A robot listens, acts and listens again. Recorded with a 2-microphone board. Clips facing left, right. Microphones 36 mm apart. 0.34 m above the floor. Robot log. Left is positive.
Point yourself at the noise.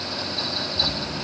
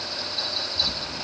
note: The snoring: about 20° right or 160° right.
cmd yaw -20
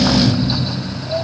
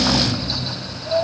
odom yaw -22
note: So it is at 140° right.
cmd yaw -140
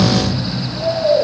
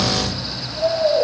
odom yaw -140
end: Facing the snoring.